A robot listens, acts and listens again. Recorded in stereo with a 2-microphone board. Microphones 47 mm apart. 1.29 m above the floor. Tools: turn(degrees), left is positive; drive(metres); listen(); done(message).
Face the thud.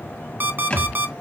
turn(degrees=30)
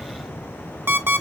listen()
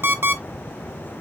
done("I heard a thud, but can't make it out now. It was about straight ahead or 120° left.")